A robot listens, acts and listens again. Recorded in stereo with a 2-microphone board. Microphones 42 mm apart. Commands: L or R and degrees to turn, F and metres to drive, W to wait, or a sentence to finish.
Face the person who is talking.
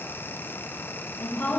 L90
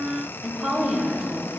Found it: a woman speaking, straight ahead.